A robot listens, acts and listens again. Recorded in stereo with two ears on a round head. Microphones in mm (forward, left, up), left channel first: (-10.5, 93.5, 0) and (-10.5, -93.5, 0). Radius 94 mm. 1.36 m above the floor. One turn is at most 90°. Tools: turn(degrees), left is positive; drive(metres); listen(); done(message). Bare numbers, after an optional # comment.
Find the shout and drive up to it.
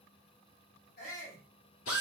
# The shout: about 45° left or 135° left.
turn(45)
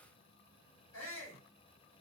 # So it is at 90° left.
turn(90)
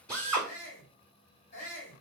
# The shout is now 40° left.
turn(40)
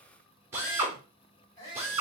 # The shout is now 20° left.
turn(20)
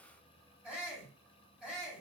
drive(1.0)
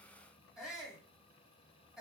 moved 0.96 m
drive(1.0)
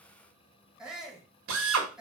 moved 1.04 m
drive(1.0)
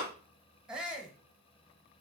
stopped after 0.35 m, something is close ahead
done("I am next to the shout.")